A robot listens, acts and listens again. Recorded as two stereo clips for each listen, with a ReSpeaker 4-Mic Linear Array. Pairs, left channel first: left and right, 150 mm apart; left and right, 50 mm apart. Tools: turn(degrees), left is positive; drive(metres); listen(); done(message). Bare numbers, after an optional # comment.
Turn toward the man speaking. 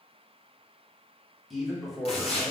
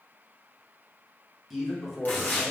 turn(30)
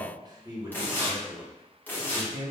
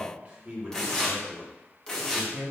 # So it is at 30° right.
turn(-30)
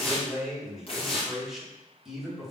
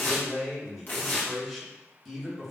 done("Found it: a man speaking, straight ahead.")